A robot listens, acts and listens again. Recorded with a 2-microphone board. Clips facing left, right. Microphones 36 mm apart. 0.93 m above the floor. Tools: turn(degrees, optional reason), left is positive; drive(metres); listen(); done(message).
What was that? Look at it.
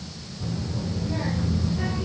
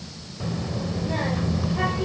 turn(degrees=-60, reason="The child speaking: about 60° right or 120° right.")
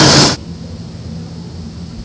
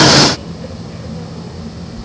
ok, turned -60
turn(degrees=-80, reason="So it is at 80° right.")
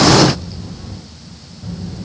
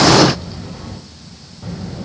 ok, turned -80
turn(degrees=-45, reason="The child speaking is now 45° right.")
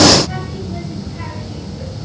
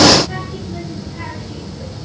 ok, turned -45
turn(degrees=15, reason="The child speaking is now 15° left.")
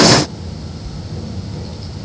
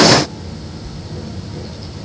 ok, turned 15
done("Facing the child speaking.")